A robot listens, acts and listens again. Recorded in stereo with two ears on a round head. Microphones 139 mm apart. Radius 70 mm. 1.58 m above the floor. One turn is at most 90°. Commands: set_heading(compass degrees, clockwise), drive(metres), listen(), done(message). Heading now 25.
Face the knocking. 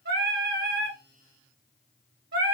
listen()
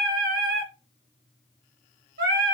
listen()
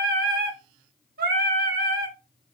done("I can't make out knocking to turn to.")